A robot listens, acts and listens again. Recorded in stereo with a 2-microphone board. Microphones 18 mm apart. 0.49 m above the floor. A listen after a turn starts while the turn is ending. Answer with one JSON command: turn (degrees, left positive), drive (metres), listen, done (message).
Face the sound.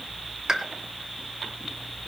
{"turn": -40}
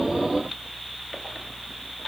{"listen": true}
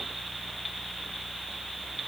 {"done": "I heard a pop, but can't make it out now. It was about straight ahead or 100° right."}